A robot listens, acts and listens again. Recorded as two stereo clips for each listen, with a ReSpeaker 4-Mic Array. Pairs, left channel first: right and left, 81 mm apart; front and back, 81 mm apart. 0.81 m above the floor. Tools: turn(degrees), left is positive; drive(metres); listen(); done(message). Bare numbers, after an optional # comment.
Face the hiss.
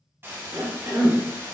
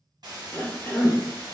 # The hiss: 150° left.
turn(150)
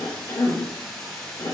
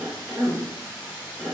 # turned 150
done("Facing the hiss.")